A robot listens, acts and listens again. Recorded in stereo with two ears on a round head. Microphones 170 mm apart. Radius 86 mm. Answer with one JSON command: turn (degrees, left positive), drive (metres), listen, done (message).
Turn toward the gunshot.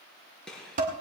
{"turn": 30}
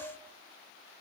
{"listen": true}
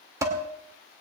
{"done": "I heard a gunshot, but can't make it out now. It was about 25° right or 145° left."}